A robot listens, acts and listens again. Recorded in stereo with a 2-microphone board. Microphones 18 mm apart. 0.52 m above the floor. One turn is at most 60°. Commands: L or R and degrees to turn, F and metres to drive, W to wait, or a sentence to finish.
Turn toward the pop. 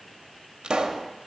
R60
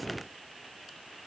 W
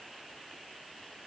I heard a pop, but can't make it out now. It was about 5° right or 55° right.